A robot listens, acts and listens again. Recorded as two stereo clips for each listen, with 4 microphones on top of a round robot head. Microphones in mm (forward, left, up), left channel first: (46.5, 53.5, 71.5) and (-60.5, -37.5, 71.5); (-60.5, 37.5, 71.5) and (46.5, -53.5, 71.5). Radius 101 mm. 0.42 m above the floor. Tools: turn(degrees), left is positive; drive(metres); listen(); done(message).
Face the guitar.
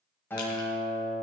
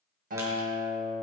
turn(degrees=-35)
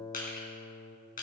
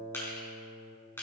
done("Facing the guitar, 2 to 4 m away.")